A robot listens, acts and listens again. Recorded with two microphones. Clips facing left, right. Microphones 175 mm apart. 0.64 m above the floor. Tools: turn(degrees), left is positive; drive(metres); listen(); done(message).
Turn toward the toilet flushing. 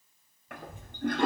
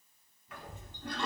turn(degrees=70)
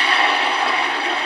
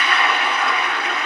turn(degrees=30)
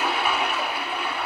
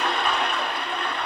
done("Found it: a toilet flushing, straight ahead, under 1 m away.")